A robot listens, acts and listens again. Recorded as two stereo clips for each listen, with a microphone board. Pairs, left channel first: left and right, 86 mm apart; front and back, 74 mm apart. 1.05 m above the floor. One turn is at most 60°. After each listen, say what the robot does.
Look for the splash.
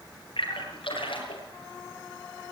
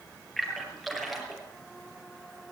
Turn 60° left.
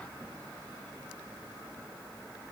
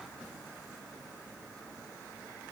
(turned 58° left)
Turn 30° left.
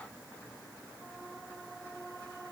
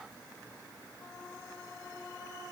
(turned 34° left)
Facing where the splash came from. I can't hear it now.